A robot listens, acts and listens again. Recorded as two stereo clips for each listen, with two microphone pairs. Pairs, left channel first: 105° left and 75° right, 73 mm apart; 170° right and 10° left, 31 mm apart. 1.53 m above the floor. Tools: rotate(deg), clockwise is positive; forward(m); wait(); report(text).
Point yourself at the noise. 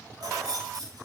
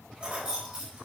rotate(45)
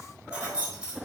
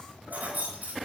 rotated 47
report("Found it: keys jangling, straight ahead.")